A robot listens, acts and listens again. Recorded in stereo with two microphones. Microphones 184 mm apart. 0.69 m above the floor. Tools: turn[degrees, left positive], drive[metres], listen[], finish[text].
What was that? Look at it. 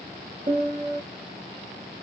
Thought: The piano: about 30° right or 150° right.
Action: turn[-30]
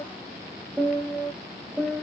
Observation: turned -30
Action: finish[Facing the piano.]